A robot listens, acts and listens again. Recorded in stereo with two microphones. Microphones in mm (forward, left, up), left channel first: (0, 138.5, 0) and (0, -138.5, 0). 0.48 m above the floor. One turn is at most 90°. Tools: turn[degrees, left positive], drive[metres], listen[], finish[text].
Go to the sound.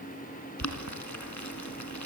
Action: turn[90]
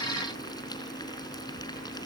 Thought: So it is at 15° left.
Action: turn[15]
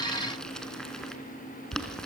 Action: drive[1.0]
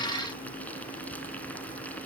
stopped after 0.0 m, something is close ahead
Action: finish[Something is in my way. I am facing the boiling but have not reached it.]